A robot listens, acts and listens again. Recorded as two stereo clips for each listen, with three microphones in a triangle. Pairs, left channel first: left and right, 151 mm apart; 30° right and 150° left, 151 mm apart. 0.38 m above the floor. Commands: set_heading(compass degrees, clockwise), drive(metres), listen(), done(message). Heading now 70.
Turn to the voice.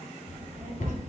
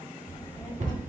set_heading(160)
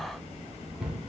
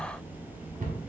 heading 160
set_heading(180)
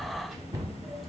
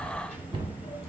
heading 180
done("Found it: a child speaking, straight ahead.")